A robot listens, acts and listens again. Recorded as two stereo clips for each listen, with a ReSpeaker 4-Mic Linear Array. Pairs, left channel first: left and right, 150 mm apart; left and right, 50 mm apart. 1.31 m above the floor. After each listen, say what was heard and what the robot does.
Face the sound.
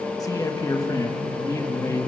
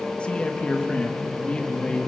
The man speaking: about 20° left or 160° left. Turn 20° left.
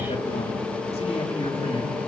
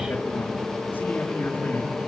The man speaking: about 40° left or 140° left. Turn 40° left.
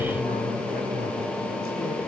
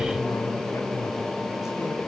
Keep listening.
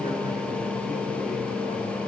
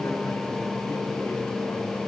Keep listening.
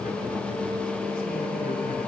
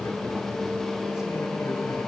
I heard a man speaking, but can't make it out now. It was about straight ahead or 100° left.